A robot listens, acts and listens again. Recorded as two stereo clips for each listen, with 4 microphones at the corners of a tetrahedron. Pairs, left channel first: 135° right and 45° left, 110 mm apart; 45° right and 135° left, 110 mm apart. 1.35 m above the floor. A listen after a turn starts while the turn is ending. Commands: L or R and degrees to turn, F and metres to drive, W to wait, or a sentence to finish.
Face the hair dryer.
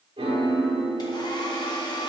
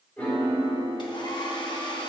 R85
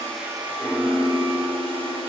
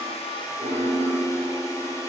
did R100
L15
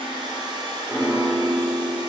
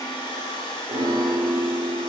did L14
Found it: a hair dryer, straight ahead.